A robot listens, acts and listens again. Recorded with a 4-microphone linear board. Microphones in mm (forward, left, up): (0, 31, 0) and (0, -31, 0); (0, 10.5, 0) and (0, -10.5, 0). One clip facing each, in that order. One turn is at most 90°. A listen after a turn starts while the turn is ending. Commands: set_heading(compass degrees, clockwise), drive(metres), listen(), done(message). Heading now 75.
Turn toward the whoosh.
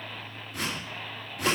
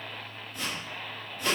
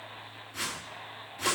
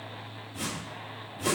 set_heading(345)
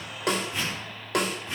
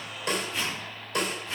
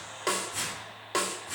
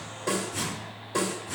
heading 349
set_heading(339)
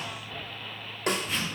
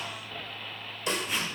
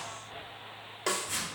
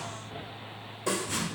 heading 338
done("Facing the whoosh.")